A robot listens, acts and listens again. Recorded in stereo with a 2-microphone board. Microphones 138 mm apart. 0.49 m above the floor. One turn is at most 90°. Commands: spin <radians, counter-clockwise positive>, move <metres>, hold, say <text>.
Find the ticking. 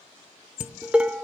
hold
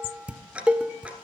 spin -0.52
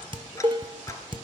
hold
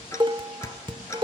spin 0.35
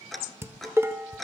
say Found it: ticking, straight ahead.